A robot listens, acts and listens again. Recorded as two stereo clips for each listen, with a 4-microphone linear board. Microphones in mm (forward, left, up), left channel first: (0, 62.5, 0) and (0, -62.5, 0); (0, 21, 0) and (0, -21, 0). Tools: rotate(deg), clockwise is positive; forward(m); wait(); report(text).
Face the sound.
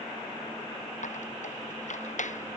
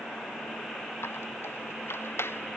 rotate(-90)
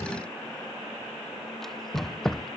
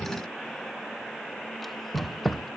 report("Facing the squeak.")